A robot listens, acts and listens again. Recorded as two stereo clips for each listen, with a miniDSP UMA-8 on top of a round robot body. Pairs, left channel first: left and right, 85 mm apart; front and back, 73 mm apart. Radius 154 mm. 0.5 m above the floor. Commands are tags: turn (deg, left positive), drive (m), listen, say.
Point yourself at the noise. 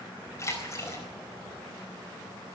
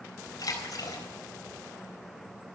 <turn deg="35"/>
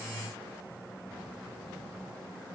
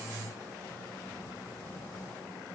<say>Facing where the splash came from. I can't hear it now.</say>